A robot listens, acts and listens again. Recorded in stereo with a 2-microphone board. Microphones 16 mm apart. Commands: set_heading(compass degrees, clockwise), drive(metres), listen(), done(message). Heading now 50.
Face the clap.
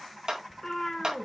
set_heading(100)
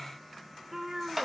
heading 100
set_heading(110)
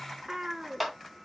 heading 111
done("Facing the clap.")